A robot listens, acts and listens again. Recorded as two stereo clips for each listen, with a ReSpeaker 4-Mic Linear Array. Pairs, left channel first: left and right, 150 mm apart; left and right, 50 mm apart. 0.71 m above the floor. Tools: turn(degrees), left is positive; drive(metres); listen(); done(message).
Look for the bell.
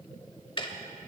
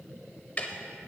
listen()
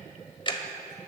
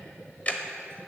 listen()
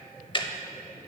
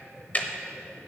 done("I can't make out a bell, only ticking.")